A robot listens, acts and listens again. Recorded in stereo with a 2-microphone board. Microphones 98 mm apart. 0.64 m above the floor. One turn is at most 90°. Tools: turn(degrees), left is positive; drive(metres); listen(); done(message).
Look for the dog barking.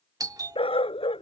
turn(degrees=90)
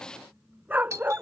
turn(degrees=-20)
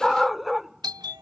done("Facing the dog barking.")